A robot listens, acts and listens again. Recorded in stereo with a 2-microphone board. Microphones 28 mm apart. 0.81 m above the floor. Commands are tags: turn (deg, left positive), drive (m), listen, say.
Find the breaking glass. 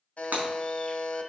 <turn deg="-90"/>
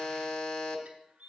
<say>I heard breaking glass from this way, but can't make it out now.</say>